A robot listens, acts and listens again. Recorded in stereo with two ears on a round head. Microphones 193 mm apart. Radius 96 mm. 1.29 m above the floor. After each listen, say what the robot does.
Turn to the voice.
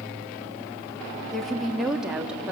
Turn 30° right.
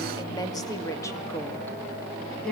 Turn 30° left.
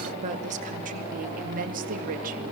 Turn 40° right.
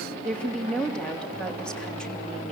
Found it: a woman speaking, straight ahead.